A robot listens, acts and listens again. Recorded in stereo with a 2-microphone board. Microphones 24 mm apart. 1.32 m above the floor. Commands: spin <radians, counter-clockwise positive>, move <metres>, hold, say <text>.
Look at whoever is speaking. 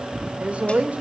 spin -1.57
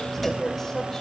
spin 0.35
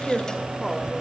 say Found it: a woman speaking, straight ahead.